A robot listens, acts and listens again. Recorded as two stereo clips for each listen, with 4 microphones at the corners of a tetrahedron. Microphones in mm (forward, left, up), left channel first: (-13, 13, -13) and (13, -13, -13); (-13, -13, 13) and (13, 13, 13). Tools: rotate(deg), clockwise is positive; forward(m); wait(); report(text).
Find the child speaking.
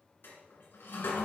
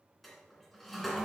wait()
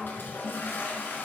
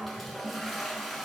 wait()
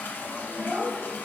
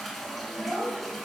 rotate(15)
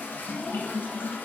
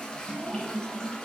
wait()
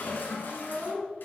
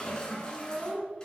rotate(15)
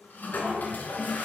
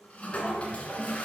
wait()
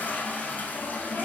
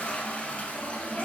wait()
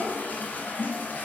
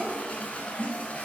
report("I heard a child speaking from this way, but can't make it out now.")